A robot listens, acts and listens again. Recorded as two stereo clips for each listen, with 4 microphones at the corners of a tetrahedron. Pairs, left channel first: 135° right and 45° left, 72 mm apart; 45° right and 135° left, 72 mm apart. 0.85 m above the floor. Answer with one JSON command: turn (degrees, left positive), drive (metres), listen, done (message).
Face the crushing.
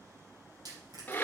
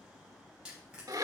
{"turn": 55}
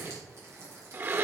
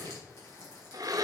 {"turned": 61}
{"done": "Facing the crushing, over 4 m away."}